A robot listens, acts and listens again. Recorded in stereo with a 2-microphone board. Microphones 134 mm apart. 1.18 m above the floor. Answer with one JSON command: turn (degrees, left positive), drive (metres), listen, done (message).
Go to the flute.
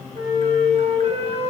{"turn": -50}
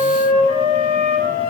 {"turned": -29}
{"turn": -100}
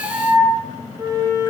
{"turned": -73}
{"turn": -30}
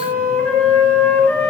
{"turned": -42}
{"turn": 15}
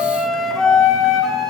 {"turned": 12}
{"drive": 1.0}
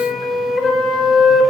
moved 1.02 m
{"drive": 1.0}
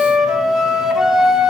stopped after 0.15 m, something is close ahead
{"done": "I am next to the flute."}